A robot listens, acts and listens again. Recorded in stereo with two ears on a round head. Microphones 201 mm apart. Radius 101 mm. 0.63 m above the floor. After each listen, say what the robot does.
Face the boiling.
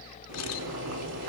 Turn 75° right.
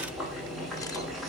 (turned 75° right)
Found it: boiling, straight ahead, over 4 m away.